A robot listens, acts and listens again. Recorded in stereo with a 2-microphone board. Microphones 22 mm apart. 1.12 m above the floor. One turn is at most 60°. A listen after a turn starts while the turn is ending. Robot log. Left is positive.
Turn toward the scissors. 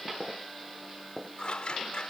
note: The scissors: about 50° left or 130° left.
cmd yaw +50
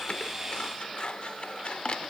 note: So it is at 70° left.
cmd yaw +60
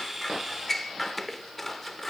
note: The scissors is now 10° left.
cmd yaw +10
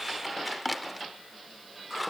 end: Facing the scissors.